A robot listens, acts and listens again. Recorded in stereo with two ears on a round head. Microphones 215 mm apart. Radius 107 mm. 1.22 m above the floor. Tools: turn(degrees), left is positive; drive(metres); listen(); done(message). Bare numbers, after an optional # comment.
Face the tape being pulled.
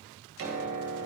listen()
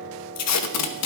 # The tape being pulled: about 75° left or 105° left.
turn(75)
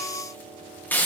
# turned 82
# So it is at 10° left.
turn(10)
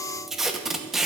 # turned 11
done("Facing the tape being pulled.")